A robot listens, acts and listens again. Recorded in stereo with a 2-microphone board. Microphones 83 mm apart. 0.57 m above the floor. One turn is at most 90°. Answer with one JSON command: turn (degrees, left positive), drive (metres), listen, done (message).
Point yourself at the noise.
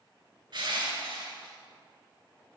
{"turn": -70}
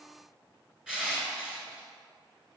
{"turn": -10}
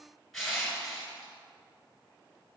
{"done": "Facing the crushing, 1 to 2 m away."}